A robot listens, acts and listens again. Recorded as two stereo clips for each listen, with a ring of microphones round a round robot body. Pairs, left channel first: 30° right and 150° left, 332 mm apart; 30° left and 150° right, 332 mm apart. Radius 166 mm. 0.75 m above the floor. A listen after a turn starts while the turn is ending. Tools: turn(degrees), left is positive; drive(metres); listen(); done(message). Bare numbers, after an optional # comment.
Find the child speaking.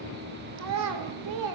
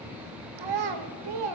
# The child speaking: 175° right.
turn(-175)
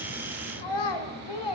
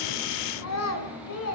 # The child speaking is now 20° right.
turn(-20)
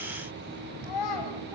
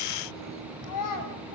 done("Facing the child speaking.")